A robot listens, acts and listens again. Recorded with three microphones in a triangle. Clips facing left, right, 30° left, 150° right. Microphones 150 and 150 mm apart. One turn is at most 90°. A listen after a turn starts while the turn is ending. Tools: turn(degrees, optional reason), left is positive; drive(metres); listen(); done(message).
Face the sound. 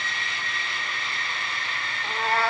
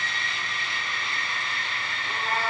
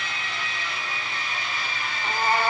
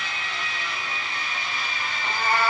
turn(degrees=90, reason="The cat meowing: 100° left.")
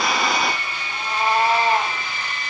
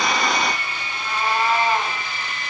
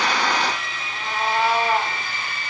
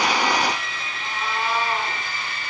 turn(degrees=35, reason="The cat meowing is now 35° left.")
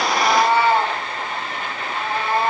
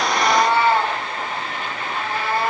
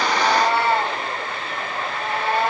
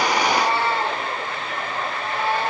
turn(degrees=20, reason="The cat meowing is now 20° left.")
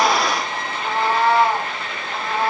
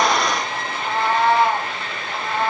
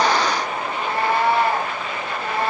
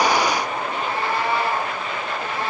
done("Facing the cat meowing, 2 to 4 m away.")